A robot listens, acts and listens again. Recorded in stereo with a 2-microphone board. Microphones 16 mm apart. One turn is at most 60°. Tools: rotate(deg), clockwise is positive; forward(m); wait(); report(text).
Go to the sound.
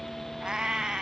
rotate(60)
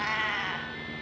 forward(1.0)
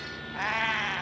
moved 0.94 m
rotate(10)
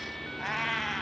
forward(1.0)
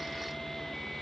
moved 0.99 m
wait()
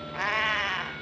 forward(1.0)
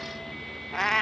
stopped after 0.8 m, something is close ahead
rotate(-15)
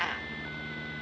report("Arrived at the cat meowing, straight ahead.")